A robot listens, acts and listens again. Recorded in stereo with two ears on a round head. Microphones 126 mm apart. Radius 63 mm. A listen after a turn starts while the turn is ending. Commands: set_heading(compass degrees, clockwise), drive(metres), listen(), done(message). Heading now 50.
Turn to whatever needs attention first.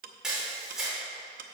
listen()
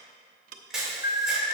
set_heading(320)
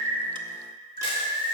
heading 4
set_heading(324)
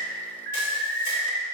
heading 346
set_heading(326)
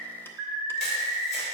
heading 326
done("Facing the alarm, 2 to 4 m away.")